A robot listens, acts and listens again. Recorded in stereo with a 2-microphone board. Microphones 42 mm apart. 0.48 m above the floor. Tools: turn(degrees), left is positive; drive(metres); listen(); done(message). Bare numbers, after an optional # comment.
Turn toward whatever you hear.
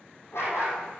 turn(90)
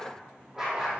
# So it is at 15° right.
turn(-15)
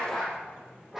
done("Found it: a dog barking, straight ahead, over 4 m away.")